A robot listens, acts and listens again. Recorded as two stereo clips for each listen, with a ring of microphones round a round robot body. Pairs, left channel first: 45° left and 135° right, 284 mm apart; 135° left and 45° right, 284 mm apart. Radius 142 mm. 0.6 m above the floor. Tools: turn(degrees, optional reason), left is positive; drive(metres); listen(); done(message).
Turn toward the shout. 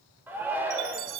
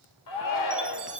turn(degrees=140, reason="The shout: 140° left.")
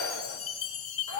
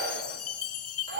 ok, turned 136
done("Facing the shout.")